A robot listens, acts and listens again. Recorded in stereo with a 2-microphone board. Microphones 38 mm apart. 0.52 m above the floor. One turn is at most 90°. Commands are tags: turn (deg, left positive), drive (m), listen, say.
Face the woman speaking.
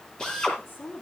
<turn deg="75"/>
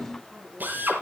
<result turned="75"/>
<say>Found it: a woman speaking, straight ahead.</say>